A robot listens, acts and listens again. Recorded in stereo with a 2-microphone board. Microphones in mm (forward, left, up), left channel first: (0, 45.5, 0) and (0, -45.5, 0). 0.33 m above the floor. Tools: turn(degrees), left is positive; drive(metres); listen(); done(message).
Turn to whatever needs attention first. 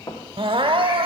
turn(degrees=-65)
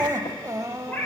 turn(degrees=-35)
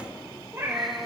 listen()
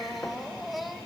done("Facing the crying.")